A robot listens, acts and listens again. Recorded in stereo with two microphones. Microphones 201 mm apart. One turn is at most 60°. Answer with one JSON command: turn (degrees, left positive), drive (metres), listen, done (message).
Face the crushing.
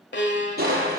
{"turn": -50}
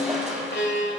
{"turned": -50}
{"done": "Found it: crushing, straight ahead."}